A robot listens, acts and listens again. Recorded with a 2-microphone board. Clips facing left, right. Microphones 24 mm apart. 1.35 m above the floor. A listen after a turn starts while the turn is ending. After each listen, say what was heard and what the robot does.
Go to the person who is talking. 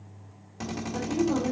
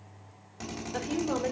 Turn 90° right.
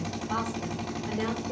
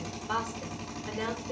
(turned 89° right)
So it is at 10° right. Turn 10° right.
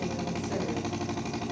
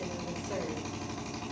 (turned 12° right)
Keep listening.
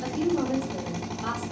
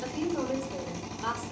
Drive 1.0 m forward.
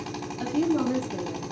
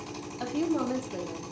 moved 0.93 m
Drive 1.0 m forward.
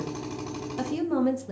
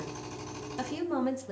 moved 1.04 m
Drive 1.0 m forward.
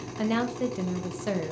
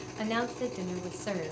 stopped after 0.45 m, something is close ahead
The woman speaking is now 10° left. Turn 10° left.
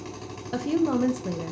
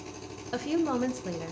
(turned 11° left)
Arrived at the woman speaking, straight ahead.